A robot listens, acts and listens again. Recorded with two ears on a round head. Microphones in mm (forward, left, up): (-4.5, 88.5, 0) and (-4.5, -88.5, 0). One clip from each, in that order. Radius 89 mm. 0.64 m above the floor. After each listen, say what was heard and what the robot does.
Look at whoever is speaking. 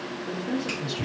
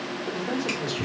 The man speaking: about 50° right or 130° right. Turn 50° right.
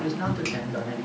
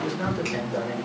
Found it: a man speaking, straight ahead.